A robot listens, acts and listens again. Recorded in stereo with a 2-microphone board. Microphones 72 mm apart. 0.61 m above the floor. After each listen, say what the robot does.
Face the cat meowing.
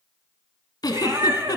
Turn 65° right.
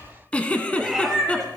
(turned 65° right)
Found it: a cat meowing, straight ahead.